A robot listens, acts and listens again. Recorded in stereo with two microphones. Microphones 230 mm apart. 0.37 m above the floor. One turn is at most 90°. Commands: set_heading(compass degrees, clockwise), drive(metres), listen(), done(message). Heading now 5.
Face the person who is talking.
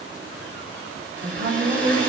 set_heading(65)
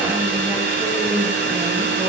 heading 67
done("Found it: a woman speaking, straight ahead.")